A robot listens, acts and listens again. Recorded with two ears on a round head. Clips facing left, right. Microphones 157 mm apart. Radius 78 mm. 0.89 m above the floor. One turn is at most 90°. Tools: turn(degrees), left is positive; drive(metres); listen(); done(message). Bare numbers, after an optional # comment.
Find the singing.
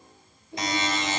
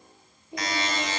# The singing: about 15° right or 165° right.
turn(-15)
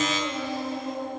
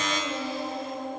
turn(-30)
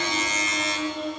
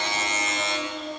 # So it is at 25° left.
turn(25)
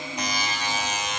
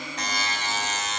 listen()
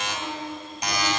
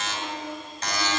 # The singing is now 15° right.
turn(-15)
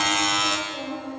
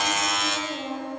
done("Found it: singing, straight ahead.")